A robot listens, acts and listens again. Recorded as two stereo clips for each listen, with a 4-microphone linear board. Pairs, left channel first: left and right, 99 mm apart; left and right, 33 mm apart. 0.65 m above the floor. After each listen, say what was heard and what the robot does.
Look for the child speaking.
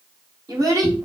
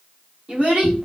The child speaking: about 35° right or 145° right. Turn 35° right.
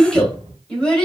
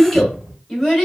So it is at 10° left. Turn 10° left.
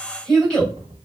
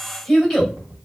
The child speaking is now 10° left. Turn 10° left.
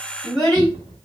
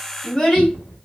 The child speaking is now 10° left. Turn 10° left.
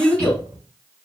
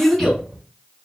Found it: a child speaking, straight ahead, 2 to 4 m away.